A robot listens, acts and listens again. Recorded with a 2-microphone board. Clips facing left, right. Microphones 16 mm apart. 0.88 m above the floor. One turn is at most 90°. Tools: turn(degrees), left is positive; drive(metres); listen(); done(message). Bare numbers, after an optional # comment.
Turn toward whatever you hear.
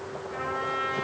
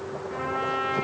# The trumpet: about 15° right or 165° right.
turn(-15)
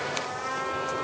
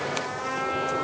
# So it is at 150° right.
turn(-90)
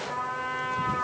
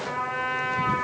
# The trumpet is now 95° right.
turn(-90)
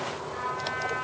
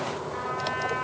done("Found it: a trumpet, straight ahead, over 4 m away.")